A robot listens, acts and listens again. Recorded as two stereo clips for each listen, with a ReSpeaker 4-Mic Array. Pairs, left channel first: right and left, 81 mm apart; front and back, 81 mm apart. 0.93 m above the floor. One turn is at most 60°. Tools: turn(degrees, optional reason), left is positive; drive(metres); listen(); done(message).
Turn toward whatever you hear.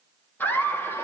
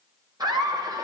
turn(degrees=-60, reason="The laughter: 145° right.")
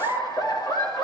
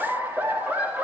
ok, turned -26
turn(degrees=-60, reason="The laughter is now 110° right.")
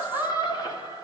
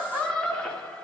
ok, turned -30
turn(degrees=-60, reason="The laughter is now 75° right.")
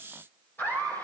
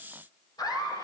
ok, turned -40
turn(degrees=-30, reason="The laughter is now 30° right.")
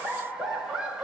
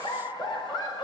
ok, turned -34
turn(degrees=10, reason="The laughter is now 10° left.")
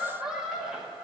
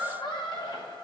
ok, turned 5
done("Found it: laughter, straight ahead.")